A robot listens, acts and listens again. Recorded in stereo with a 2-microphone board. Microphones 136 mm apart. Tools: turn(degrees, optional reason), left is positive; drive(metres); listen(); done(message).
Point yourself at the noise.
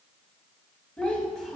turn(degrees=30)
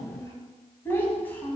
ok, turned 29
turn(degrees=30)
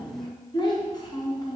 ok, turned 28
turn(degrees=155, reason="So it is at 155° left.")
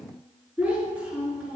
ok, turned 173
turn(degrees=-10, reason="The child speaking is now 10° right.")
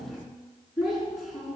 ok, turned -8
done("Facing the child speaking, over 4 m away.")